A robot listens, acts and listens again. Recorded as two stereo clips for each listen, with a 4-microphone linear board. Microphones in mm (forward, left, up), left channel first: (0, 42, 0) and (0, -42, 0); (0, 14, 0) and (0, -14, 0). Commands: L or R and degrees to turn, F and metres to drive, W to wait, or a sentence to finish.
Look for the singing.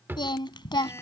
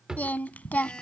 L65
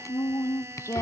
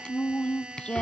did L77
L35
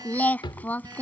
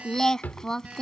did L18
L20
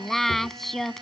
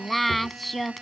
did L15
Found it: singing, straight ahead.